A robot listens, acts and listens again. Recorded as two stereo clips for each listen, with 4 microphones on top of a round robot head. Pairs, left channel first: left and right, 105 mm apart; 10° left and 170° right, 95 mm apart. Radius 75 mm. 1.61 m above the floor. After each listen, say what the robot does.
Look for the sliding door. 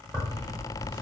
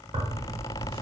Keep listening.
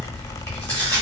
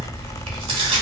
Keep listening.
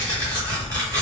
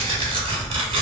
I can't make out a sliding door to turn to.